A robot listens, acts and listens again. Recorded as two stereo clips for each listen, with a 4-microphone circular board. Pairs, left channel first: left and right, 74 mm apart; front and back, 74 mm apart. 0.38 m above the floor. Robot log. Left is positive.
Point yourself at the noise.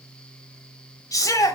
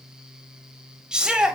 note: The shout: 105° left.
cmd yaw +105
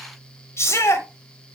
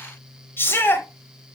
note: The shout is now 50° left.
cmd yaw +50
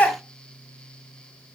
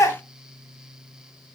note: The shout is now 25° left.
cmd yaw +25
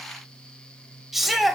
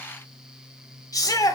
end: Facing the shout, 1 to 2 m away.